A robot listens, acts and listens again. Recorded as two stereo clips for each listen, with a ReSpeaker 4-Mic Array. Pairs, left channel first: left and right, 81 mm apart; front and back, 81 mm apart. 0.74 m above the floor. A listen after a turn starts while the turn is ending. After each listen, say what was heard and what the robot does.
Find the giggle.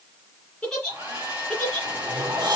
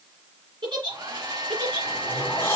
The giggle: 175° left. Turn 175° left.
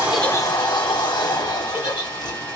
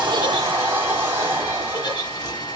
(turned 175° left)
Keep listening.
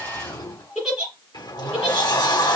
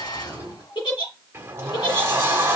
Found it: a giggle, straight ahead, 2 to 4 m away.